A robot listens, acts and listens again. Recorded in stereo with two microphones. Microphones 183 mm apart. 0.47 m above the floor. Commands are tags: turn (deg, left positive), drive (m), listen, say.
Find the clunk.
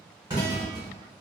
<turn deg="-20"/>
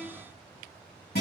<listen/>
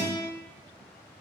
<say>I heard a clunk, but can't make it out now. It was about straight ahead or 140° right.</say>